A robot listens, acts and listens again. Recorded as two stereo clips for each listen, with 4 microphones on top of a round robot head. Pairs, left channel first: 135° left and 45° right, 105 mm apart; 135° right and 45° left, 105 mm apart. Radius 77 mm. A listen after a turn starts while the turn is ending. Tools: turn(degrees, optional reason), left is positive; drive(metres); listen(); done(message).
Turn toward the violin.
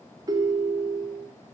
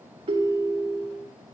listen()
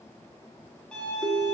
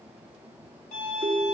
turn(degrees=-145, reason="The violin: 145° right.")
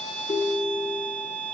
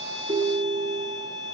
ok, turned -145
turn(degrees=-45, reason="The violin is now 45° right.")
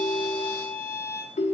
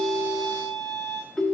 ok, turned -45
turn(degrees=-10, reason="The violin is now 10° right.")
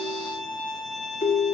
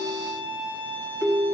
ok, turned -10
done("Found it: a violin, straight ahead.")